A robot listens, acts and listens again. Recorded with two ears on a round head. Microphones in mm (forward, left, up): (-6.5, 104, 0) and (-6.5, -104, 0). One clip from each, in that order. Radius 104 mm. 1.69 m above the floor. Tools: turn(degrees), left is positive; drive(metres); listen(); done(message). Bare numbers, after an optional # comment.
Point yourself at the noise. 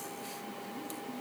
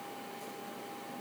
listen()
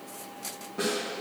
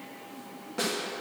# The snare drum: about 40° right or 140° right.
turn(-40)
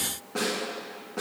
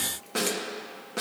# So it is at 100° right.
turn(-100)
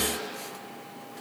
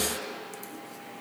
listen()
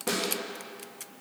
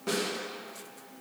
done("Facing the snare drum.")